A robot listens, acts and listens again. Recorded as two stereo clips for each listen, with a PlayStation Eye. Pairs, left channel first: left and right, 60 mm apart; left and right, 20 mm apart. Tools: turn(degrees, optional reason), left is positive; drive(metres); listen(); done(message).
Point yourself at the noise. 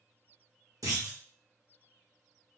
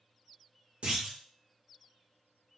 turn(degrees=-70, reason="The clunk: about 70° right or 110° right.")
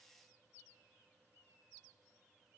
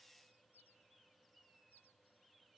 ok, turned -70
listen()
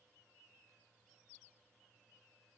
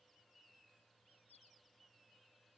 done("I heard a clunk, but can't make it out now. It was about straight ahead or 40° right.")